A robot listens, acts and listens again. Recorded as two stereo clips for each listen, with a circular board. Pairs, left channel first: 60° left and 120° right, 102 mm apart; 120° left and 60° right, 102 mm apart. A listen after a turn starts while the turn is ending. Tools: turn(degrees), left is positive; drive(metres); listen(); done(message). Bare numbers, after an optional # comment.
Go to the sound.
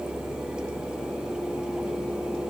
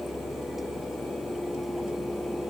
listen()
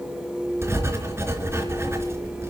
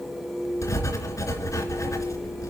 # The writing: straight behind.
turn(180)
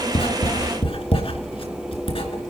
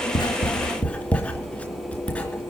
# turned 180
# The writing is now 45° left.
turn(45)
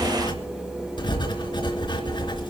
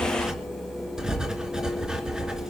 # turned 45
# The writing is now 25° left.
turn(25)
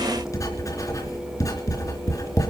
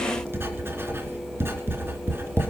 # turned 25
drive(1.0)
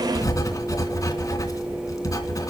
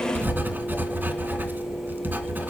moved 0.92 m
# The writing is now 10° left.
turn(10)
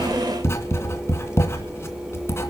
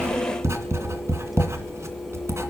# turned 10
drive(1.0)
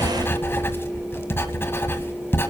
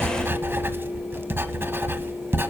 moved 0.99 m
drive(1.0)
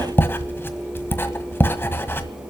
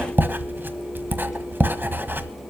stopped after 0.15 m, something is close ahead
done("I am next to the writing.")